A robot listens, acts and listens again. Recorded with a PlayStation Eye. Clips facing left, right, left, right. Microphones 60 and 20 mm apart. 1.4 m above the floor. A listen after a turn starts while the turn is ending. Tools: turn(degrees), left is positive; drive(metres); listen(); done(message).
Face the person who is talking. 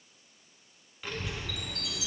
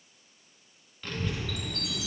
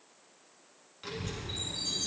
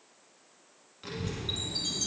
turn(degrees=30)
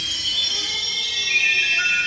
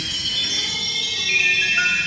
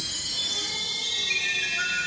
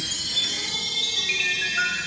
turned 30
turn(degrees=-25)
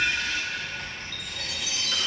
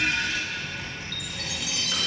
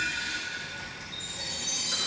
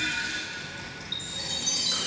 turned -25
turn(degrees=-10)
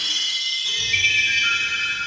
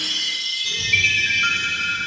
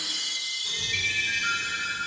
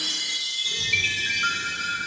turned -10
done("Found it: a child speaking, straight ahead, over 4 m away.")